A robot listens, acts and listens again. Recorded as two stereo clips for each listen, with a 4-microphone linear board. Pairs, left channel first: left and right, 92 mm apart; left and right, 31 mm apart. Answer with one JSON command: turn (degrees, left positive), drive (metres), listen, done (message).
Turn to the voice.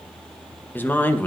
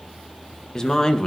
{"turn": 20}
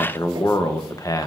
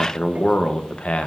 {"turn": 140}
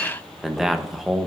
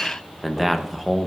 {"done": "Found it: a man speaking, straight ahead."}